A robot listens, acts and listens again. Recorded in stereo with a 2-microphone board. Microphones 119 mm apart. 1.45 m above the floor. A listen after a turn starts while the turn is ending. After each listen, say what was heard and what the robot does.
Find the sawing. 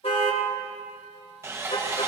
The sawing: about 20° right or 160° right. Turn 20° right.
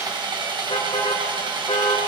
So it is at 140° right. Turn 140° right.
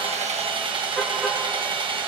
The sawing is now 50° right. Turn 50° right.
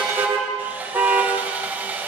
The sawing is now 15° right. Turn 15° right.
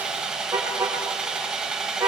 The sawing is now 10° right. Turn 10° right.
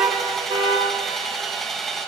Found it: sawing, straight ahead.